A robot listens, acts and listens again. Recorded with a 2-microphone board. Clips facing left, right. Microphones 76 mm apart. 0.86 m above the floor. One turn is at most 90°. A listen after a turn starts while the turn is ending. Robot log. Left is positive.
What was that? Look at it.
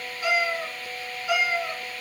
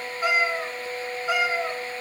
note: The cat meowing: about 30° right or 150° right.
cmd yaw -30
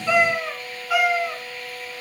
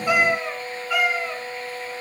note: So it is at 10° left.
cmd yaw +10
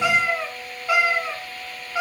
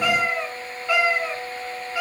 note: The cat meowing is now 20° left.
cmd yaw +20
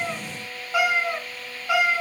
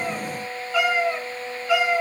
note: The cat meowing is now 15° left.
cmd yaw +15
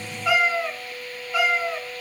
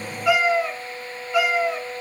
end: Facing the cat meowing, 2 to 4 m away.